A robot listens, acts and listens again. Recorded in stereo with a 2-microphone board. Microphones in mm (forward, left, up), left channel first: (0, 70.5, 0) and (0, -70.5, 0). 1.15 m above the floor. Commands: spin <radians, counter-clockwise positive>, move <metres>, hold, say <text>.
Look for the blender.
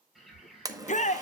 spin -0.44
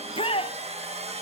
spin -2.27
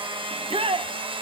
spin -0.70
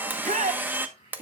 spin -0.26
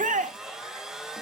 say Facing the blender.